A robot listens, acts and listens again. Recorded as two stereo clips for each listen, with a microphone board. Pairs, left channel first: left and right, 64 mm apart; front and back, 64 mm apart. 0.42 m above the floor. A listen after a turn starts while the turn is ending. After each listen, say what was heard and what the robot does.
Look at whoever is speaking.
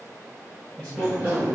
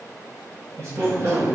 The man speaking: 155° left. Turn 155° left.
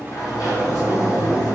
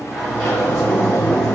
Keep listening.
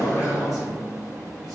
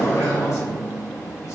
Keep listening.
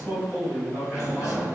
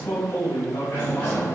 Found it: a man speaking, straight ahead.